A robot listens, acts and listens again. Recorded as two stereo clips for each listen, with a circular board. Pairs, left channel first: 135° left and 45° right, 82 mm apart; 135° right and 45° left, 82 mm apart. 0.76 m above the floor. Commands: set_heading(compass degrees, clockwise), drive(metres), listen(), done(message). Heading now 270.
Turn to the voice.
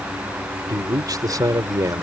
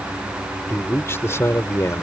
set_heading(355)
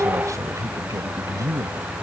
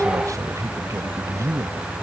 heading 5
done("Facing the man speaking.")